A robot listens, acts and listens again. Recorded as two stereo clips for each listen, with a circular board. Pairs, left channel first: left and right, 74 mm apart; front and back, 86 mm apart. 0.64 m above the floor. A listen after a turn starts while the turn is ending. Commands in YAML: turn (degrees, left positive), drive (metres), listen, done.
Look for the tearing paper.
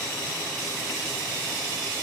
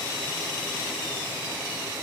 listen: true
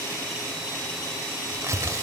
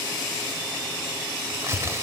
turn: -130
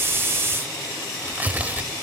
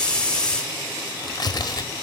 turn: -25
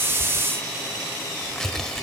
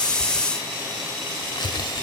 done: "Facing the tearing paper, 1 to 2 m away."